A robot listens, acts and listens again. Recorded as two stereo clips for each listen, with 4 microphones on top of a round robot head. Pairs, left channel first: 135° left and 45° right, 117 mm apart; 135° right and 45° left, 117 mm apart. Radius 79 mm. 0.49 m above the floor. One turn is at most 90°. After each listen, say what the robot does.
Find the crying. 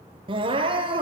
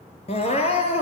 Turn 90° right.
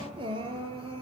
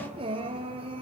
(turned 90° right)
Found it: crying, straight ahead.